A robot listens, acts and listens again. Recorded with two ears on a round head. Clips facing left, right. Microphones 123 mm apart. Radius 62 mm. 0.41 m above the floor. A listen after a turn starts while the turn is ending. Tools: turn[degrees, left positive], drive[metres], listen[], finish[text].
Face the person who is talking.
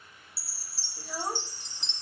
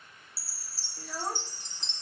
Action: turn[30]
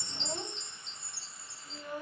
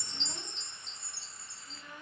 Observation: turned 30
Thought: So it is at 140° left.
Action: turn[140]
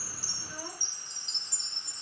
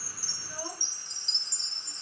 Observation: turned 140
Action: listen[]
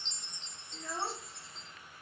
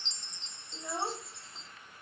Thought: The child speaking is now 15° right.
Action: turn[-15]
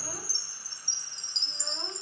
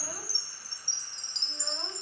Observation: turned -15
Action: listen[]
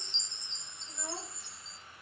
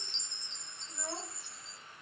Action: listen[]
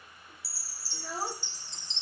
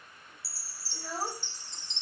Action: finish[Facing the child speaking, under 1 m away.]